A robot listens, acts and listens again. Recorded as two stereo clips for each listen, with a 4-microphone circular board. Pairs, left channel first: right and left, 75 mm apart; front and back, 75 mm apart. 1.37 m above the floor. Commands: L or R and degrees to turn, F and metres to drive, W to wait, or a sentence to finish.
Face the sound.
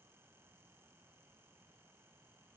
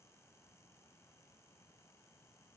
W
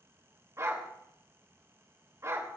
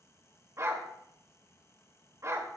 L135
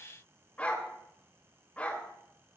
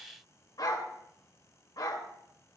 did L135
R20
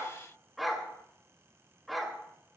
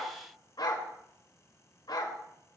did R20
Found it: a dog barking, straight ahead, 2 to 4 m away.